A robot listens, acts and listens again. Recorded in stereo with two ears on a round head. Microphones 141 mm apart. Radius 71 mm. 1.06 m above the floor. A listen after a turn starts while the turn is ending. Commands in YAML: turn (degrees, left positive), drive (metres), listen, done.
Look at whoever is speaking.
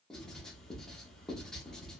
listen: true
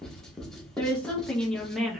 turn: -30
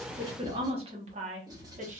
turn: -130
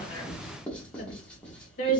turn: 55
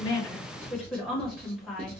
done: "Facing the woman speaking."